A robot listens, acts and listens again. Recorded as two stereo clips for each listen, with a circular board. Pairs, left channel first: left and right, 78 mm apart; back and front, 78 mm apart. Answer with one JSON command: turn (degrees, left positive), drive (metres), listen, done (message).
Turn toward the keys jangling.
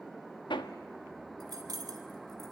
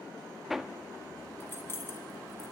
{"turn": -125}
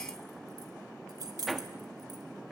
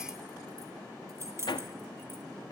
{"turn": -55}
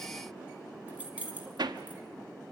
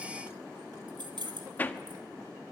{"turn": -20}
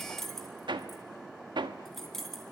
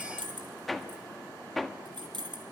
{"done": "Facing the keys jangling."}